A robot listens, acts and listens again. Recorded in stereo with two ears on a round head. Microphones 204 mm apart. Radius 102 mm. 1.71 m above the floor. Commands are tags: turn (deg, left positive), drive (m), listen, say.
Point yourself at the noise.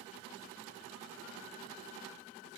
<listen/>
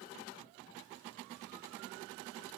<listen/>
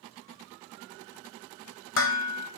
<turn deg="60"/>
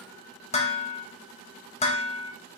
<turn deg="35"/>
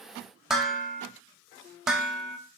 <say>Found it: dishes clattering, straight ahead.</say>